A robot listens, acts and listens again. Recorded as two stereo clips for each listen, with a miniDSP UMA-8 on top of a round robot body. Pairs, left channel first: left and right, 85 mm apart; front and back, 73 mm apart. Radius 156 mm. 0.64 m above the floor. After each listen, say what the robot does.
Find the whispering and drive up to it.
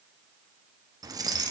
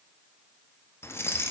Keep listening.
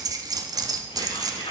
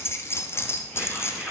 Turn 70° left.
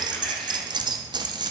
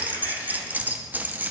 Keep listening.
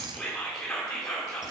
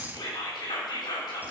Drive 1.0 m forward.
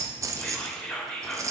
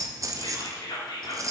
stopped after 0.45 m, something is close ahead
Something is in my way. I am facing the whispering but have not reached it.